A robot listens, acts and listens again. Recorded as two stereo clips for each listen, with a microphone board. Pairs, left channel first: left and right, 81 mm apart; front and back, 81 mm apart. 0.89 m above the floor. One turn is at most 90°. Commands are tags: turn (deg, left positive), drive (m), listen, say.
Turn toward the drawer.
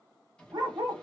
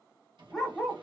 <turn deg="90"/>
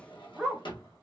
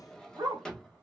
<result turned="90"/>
<turn deg="80"/>
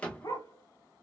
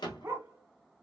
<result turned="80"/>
<turn deg="15"/>
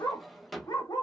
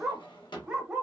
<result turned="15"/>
<say>Found it: a drawer, straight ahead, 1 to 2 m away.</say>